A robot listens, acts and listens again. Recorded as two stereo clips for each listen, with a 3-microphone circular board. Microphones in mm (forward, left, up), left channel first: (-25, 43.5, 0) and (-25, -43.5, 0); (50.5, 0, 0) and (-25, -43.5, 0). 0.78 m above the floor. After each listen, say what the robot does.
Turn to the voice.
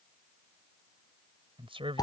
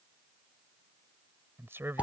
Turn 85° right.
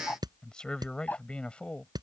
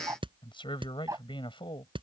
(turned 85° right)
Turn 15° left.
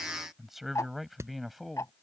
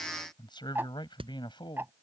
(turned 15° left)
Found it: a man speaking, straight ahead.